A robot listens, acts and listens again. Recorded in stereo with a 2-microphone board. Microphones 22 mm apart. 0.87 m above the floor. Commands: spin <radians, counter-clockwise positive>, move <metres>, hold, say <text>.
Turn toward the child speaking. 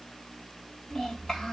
spin 0.61
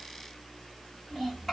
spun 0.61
say Facing the child speaking, 1 to 2 m away.